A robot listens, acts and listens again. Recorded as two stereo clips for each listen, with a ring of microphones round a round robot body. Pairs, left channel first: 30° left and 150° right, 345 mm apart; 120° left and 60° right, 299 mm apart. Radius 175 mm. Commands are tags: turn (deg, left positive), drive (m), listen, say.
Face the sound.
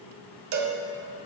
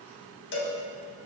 <turn deg="170"/>
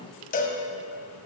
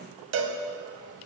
<turn deg="-35"/>
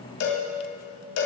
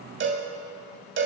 <turn deg="-10"/>
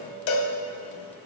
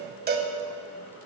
<say>Found it: a cowbell, straight ahead.</say>